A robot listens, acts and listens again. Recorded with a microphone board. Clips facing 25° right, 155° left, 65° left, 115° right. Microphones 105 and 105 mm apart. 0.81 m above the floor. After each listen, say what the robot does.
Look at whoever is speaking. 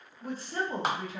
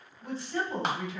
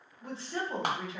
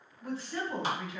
Turn 10° left.
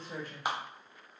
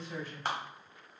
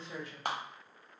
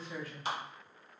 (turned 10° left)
Found it: a woman speaking, straight ahead, 1 to 2 m away.